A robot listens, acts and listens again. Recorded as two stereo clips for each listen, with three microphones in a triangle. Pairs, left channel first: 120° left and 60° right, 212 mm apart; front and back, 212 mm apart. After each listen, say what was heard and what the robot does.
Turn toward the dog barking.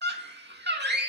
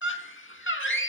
Keep listening.
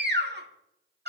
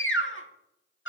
Keep listening.
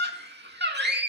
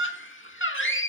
I can't make out a dog barking to turn to.